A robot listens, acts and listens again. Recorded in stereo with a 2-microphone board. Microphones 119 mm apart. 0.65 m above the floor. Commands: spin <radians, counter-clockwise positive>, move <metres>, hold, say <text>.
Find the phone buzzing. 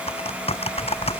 spin 1.05
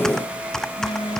spin 1.05
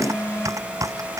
spin 0.44
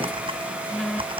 say Facing the phone buzzing.